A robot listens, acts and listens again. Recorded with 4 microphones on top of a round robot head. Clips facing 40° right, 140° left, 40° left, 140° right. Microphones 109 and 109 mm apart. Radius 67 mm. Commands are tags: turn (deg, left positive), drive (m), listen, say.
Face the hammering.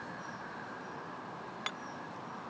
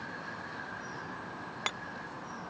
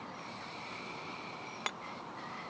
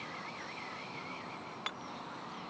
<turn deg="95"/>
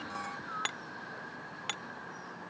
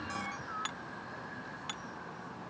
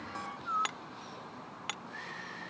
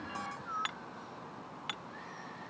<turn deg="-10"/>
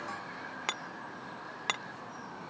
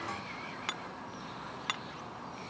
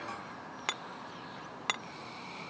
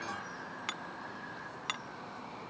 <say>Found it: hammering, straight ahead.</say>